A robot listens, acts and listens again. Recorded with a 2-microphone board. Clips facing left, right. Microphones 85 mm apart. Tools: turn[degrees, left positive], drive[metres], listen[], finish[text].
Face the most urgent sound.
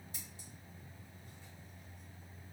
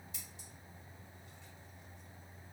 Action: listen[]
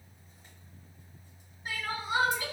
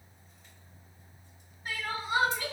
Action: turn[30]
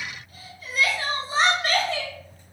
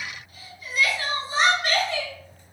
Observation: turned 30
Thought: So it is at 135° left.
Action: turn[135]
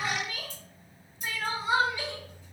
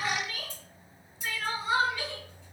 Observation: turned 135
Thought: The crying is now 30° left.
Action: turn[30]
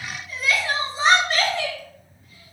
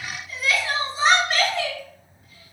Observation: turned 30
Action: finish[Found it: crying, straight ahead, 1 to 2 m away.]